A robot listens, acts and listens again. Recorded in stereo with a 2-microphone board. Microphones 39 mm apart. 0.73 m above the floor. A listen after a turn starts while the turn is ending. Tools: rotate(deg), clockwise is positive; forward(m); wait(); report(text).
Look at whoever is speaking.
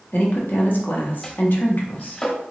rotate(-55)
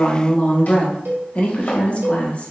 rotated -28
rotate(-40)
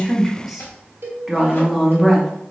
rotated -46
report("Found it: a woman speaking, straight ahead, under 1 m away.")